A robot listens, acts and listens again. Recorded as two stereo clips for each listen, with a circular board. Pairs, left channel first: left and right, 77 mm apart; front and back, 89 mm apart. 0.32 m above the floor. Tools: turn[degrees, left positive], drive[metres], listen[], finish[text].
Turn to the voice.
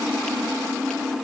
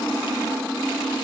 Action: listen[]
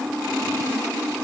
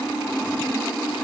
Action: listen[]
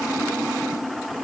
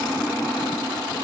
Action: finish[I can't make out anyone speaking.]